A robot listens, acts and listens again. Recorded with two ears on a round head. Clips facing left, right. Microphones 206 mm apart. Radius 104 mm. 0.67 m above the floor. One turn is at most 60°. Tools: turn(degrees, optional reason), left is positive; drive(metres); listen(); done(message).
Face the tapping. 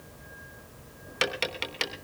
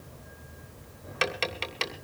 turn(degrees=15, reason="The tapping: about 15° left or 165° left.")
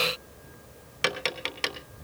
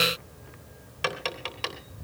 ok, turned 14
turn(degrees=60, reason="So it is at 150° left.")
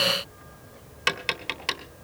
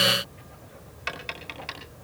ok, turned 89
turn(degrees=60, reason="The tapping is now 60° left.")
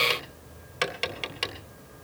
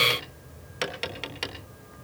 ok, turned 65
done("Found it: tapping, straight ahead.")